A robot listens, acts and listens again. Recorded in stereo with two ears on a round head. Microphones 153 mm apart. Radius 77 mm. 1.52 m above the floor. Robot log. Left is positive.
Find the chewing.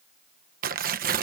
cmd idle
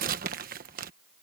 cmd idle
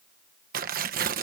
end: I can't make out chewing, only tearing paper.